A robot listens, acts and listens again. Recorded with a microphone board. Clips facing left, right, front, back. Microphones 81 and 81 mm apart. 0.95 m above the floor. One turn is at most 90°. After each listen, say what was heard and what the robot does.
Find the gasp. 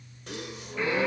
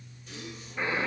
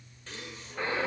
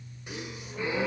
The gasp: 105° left. Turn 90° left.
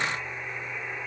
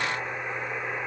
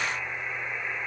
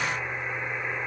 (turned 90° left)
Nothing new. It was at 15° left. Turn 15° left.
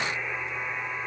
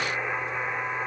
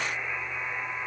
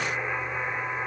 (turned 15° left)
I heard a gasp from this way, but can't make it out now.